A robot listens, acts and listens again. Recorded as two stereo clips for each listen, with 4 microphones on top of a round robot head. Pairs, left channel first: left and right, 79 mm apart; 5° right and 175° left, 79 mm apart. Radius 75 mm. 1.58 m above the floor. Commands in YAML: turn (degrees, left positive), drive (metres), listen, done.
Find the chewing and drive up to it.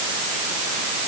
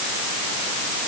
listen: true
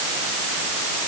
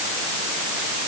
listen: true
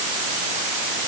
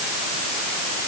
done: "I can't make out chewing to turn to."